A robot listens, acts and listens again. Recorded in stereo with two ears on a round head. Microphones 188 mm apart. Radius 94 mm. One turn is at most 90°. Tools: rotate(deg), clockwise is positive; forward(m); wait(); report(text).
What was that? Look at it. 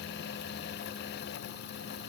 wait()
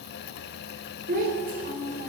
rotate(45)
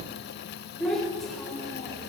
report("Found it: a child speaking, straight ahead.")